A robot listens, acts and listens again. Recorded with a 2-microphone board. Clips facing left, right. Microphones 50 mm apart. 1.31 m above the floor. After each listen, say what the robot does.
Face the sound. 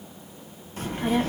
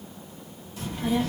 Turn 40° left.
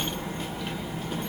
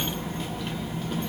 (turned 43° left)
Facing the child speaking.